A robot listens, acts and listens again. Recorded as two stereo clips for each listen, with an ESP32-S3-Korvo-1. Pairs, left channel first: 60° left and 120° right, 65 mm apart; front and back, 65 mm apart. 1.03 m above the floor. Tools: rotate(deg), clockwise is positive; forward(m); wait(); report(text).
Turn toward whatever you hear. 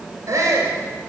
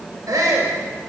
rotate(155)
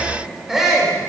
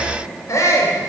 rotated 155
rotate(35)
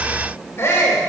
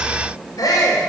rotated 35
rotate(-10)
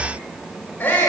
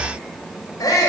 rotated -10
report("Found it: a shout, straight ahead.")